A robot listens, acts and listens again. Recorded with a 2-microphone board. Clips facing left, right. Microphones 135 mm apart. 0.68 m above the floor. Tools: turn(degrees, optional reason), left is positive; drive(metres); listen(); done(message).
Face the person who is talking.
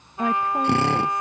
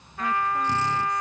turn(degrees=50, reason="The woman speaking: about 50° left or 130° left.")
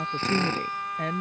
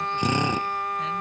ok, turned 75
turn(degrees=50, reason="So it is at 50° left.")
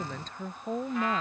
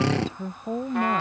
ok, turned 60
turn(degrees=-10, reason="The woman speaking is now 10° right.")
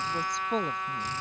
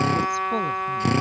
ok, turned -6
done("Facing the woman speaking.")